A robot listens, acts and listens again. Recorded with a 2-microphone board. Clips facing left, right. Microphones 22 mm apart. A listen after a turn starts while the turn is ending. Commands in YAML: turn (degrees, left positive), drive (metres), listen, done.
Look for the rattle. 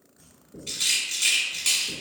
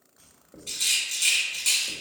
turn: 30
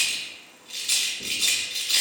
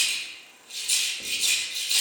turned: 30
turn: 140
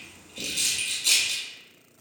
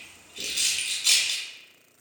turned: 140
turn: -10
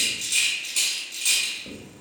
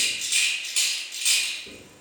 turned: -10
done: "Found it: a rattle, straight ahead, 1 to 2 m away."